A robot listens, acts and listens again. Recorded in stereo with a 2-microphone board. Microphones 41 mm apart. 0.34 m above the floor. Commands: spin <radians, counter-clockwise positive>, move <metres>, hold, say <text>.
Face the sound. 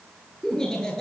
spin 0.52
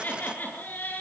spin 2.36
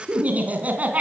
spin -0.61
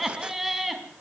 say Facing the laughter.